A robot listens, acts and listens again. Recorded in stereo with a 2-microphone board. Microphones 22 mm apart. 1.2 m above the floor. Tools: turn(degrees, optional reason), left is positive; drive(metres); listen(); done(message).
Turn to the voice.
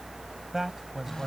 turn(degrees=-20, reason="The man speaking: about 20° right or 160° right.")
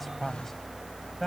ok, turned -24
done("Found it: a man speaking, straight ahead.")